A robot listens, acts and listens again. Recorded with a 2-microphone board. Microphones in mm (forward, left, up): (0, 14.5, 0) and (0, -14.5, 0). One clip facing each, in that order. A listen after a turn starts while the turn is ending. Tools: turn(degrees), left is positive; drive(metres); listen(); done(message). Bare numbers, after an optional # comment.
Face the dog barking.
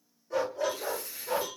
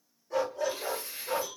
turn(30)
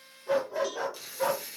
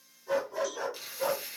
# So it is at 135° left.
turn(135)
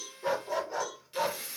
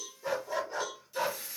done("Found it: a dog barking, straight ahead.")